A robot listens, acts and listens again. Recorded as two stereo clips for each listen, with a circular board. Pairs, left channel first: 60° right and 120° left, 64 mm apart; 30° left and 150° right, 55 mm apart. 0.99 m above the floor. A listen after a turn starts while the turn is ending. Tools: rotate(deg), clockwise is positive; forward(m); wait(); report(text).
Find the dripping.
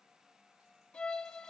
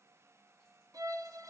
wait()
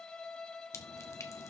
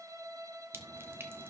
rotate(100)
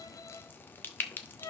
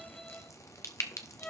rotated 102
report("Facing the dripping.")